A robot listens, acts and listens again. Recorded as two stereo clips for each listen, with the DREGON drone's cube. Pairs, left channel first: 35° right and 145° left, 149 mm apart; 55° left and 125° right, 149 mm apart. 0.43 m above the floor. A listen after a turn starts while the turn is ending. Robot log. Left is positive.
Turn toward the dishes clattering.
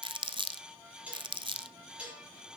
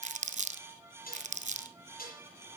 note: The dishes clattering: 65° left.
cmd yaw +65
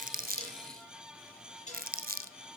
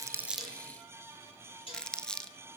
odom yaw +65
end: Found it: dishes clattering, straight ahead, over 4 m away.